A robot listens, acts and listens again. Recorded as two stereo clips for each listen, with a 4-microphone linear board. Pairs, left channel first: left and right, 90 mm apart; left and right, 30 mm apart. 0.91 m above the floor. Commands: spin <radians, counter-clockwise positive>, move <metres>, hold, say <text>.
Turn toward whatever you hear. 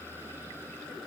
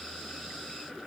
hold
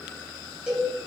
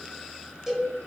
spin -0.26
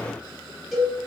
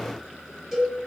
say Facing the cowbell.